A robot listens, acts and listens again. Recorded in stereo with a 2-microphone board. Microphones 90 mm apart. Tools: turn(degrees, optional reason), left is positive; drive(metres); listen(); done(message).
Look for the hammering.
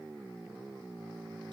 listen()
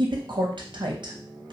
listen()
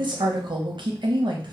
done("I can't make out hammering to turn to.")